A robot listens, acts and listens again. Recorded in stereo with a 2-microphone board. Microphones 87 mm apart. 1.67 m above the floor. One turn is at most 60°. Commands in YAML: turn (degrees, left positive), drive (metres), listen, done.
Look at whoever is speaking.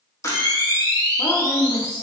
turn: 55
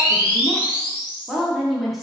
done: "Found it: a woman speaking, straight ahead, under 1 m away."